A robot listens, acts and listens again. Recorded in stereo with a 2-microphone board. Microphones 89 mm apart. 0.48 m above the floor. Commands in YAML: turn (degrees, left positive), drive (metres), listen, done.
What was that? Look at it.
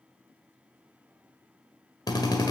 turn: 50
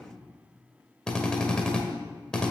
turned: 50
turn: 10
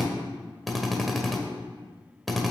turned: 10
done: "Found it: a drill, straight ahead."